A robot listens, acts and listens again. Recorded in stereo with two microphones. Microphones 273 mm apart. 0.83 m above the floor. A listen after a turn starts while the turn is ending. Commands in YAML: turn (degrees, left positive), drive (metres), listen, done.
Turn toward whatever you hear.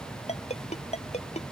turn: 25
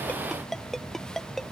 done: "Facing the ringtone."